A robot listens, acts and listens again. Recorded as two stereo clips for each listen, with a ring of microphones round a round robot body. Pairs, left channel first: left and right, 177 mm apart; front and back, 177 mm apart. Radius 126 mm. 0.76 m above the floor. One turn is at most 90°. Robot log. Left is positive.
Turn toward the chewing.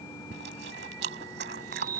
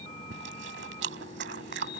note: The chewing: 135° right.
cmd yaw -90
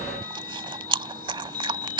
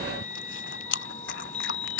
note: The chewing is now 30° right.
cmd yaw -30
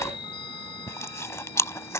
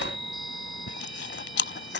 note: The chewing is now 15° left.
cmd yaw +15
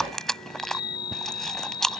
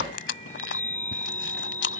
end: Facing the chewing.